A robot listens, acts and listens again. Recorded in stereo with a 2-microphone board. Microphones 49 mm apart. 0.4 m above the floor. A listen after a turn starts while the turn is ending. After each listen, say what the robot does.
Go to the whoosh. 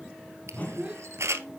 Turn 35° left.
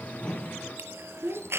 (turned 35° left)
Keep listening.
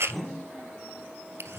Drive 1.0 m forward.
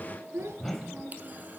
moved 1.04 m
Drive 1.0 m forward.
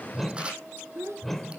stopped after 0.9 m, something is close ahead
Arrived at the whoosh, straight ahead.